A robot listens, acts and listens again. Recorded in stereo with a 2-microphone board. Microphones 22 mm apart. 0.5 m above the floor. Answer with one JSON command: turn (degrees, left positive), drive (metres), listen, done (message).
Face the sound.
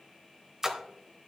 {"turn": -20}
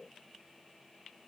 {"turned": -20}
{"listen": true}
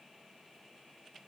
{"done": "I heard a splash, but can't make it out now. It was about straight ahead or 140° right."}